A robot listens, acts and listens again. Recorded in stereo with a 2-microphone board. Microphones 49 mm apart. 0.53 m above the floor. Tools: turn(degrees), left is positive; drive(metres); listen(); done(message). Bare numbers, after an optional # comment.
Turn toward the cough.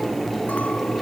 listen()
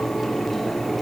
listen()
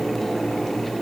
done("I can't make out a cough to turn to.")